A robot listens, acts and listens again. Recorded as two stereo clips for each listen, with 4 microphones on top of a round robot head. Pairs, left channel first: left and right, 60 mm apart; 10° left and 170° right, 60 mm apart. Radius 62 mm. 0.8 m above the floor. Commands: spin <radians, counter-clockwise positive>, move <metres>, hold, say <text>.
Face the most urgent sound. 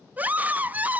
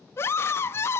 spin -0.52
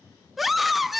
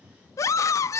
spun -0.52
say Facing the scream, under 1 m away.